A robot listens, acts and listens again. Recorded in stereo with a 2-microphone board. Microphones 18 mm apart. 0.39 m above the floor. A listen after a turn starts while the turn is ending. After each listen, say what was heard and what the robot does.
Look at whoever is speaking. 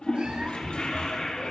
Keep listening.
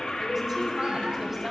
The woman speaking: about 20° right or 160° right. Turn 20° right.
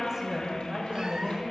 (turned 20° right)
So it is at 140° right. Turn 140° right.
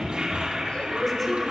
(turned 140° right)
The woman speaking is now 10° left. Turn 10° left.
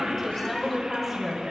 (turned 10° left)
Facing the woman speaking, over 4 m away.